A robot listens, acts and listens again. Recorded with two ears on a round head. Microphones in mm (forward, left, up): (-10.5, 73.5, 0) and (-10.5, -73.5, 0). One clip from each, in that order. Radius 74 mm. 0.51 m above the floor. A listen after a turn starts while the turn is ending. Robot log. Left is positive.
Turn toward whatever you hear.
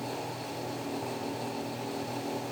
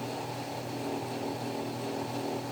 cmd idle
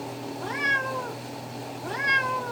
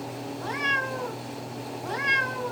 cmd yaw +30
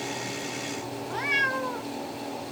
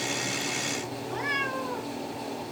note: So it is at 150° left.
cmd yaw +150
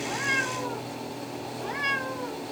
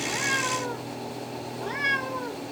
end: Facing the cat meowing, 1 to 2 m away.